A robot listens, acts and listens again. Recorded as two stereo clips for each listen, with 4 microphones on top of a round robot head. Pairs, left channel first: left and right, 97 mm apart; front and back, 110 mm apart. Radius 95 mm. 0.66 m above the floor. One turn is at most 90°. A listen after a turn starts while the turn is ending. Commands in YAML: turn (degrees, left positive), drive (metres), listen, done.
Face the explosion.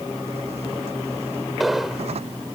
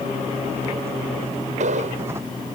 turn: 90
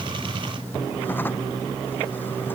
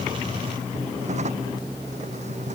turn: 90
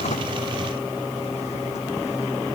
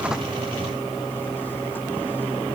done: "I heard an explosion from this way, but can't make it out now."